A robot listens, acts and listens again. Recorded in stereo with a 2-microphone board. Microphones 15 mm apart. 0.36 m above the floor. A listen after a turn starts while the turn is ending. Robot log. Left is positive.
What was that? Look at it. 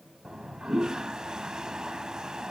note: The toilet flushing: about 50° right or 130° right.
cmd yaw -50
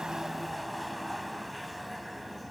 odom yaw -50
end: Found it: a toilet flushing, straight ahead.